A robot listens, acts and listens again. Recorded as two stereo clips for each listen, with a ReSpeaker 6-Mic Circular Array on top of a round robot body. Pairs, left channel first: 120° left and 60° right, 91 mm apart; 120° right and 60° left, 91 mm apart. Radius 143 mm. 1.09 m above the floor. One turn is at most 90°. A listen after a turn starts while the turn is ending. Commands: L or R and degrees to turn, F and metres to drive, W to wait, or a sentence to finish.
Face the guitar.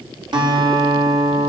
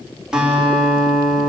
R25
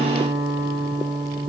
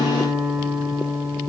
R15
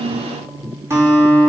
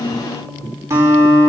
Facing the guitar, over 4 m away.